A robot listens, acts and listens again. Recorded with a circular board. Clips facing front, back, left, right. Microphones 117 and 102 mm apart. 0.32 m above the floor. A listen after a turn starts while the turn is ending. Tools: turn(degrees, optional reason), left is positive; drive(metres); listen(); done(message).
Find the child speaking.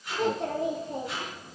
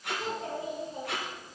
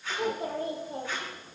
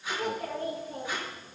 turn(degrees=25, reason="The child speaking: 25° left.")
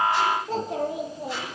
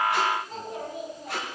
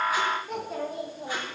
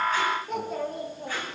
done("Facing the child speaking, over 4 m away.")